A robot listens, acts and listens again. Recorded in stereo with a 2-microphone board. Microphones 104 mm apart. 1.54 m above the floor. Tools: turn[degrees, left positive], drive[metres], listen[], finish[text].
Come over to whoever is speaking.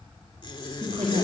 Thought: The woman speaking: about 55° right or 125° right.
Action: turn[-55]
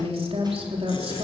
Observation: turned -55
Thought: So it is at 70° right.
Action: turn[-70]
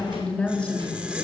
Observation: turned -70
Thought: The woman speaking is now 10° left.
Action: turn[10]
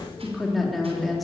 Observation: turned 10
Action: drive[1.0]
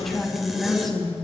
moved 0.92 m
Action: drive[1.0]
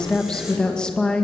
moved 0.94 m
Thought: The woman speaking is now 10° left.
Action: turn[10]
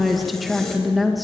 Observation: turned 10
Action: drive[1.0]
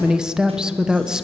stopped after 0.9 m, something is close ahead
Action: finish[I am next to the woman speaking.]